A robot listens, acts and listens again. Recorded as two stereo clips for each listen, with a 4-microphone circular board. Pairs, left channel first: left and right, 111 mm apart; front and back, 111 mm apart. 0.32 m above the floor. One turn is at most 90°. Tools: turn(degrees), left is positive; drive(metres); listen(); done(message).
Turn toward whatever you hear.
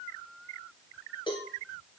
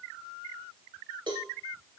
turn(degrees=90)
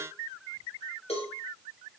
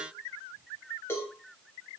turn(degrees=65)
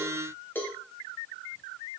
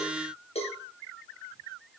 turn(degrees=20)
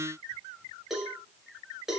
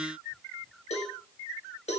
done("Found it: a cowbell, straight ahead.")